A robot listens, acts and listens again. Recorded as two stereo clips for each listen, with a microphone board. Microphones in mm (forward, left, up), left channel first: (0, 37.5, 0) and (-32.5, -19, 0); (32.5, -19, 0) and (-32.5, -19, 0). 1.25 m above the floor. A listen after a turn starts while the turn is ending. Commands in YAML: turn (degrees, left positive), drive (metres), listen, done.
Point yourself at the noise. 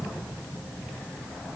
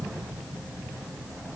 listen: true
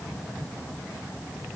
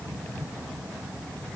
listen: true
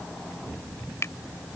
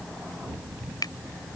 turn: 15
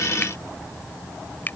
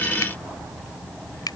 done: "Found it: a finger snap, straight ahead."